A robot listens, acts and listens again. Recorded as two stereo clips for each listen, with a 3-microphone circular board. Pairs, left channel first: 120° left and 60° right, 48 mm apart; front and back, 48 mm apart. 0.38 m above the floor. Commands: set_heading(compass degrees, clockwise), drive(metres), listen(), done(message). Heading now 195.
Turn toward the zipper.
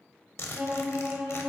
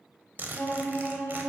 set_heading(55)
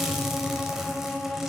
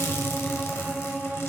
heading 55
set_heading(35)
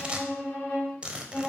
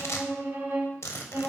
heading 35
done("Facing the zipper, under 1 m away.")